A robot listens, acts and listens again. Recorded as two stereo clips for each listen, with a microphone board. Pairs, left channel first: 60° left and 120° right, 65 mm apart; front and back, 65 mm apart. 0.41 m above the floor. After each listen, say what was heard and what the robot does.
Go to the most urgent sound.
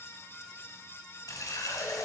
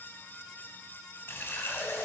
Keep listening.
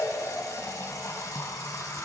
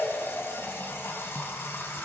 Keep listening.
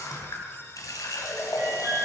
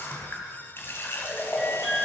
The alarm: 90° right. Turn 90° right.
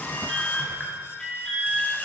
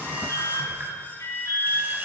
The alarm is now 15° right. Turn 15° right.
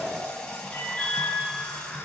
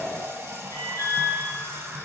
Drive 1.0 m forward.
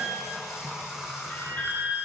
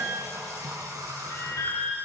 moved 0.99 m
Drive 1.0 m forward.
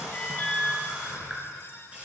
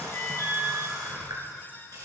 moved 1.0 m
Drive 1.0 m forward.
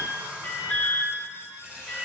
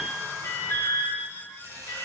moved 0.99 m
Drive 1.0 m forward.
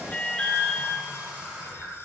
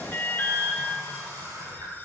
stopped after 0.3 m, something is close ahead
I am next to the alarm.